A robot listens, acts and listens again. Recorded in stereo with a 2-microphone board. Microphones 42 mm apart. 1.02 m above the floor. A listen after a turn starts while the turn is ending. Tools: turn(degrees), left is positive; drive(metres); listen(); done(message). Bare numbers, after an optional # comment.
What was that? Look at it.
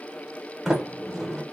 turn(-30)
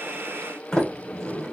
# So it is at 20° left.
turn(20)
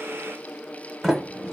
done("Facing the sliding door, 1 to 2 m away.")